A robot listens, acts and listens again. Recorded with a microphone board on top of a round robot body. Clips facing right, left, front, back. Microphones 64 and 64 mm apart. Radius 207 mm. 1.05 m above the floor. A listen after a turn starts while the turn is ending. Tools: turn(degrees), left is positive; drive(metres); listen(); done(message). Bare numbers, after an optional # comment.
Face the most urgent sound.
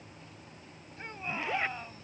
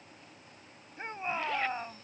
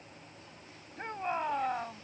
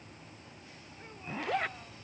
# The shout: 25° left.
turn(25)
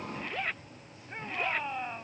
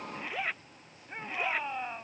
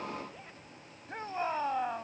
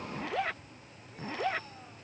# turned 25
done("Facing the shout.")